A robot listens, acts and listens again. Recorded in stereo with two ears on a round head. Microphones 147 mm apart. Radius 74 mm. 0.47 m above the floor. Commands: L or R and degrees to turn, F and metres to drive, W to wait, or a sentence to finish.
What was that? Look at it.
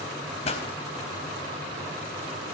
L40
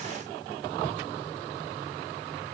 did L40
W
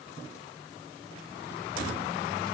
I heard a pop, but can't make it out now. It was about straight ahead or 100° left.